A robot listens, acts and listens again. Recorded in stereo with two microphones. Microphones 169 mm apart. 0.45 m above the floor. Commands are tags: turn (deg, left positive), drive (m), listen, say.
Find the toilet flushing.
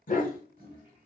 <turn deg="-60"/>
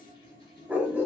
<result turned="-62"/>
<turn deg="-60"/>
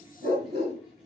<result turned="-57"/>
<say>Found it: a toilet flushing, straight ahead.</say>